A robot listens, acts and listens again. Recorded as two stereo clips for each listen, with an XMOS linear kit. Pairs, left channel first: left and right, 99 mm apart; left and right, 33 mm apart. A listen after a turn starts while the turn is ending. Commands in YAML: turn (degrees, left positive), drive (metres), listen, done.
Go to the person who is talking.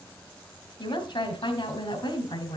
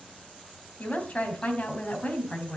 turn: 50
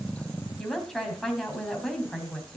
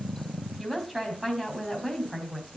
drive: 1.0
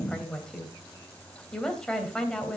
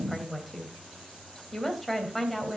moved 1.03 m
drive: 1.0
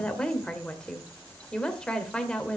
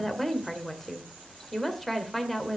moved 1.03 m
turn: 10
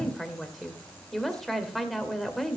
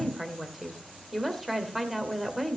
drive: 1.0
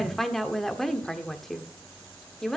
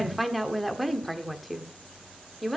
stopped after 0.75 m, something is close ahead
done: "I am next to the woman speaking."